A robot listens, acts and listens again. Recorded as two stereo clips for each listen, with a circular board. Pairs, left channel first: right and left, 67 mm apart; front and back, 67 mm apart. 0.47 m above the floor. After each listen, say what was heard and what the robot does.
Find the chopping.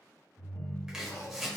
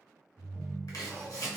The chopping: 10° left. Turn 10° left.
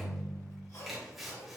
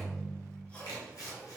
Facing the chopping.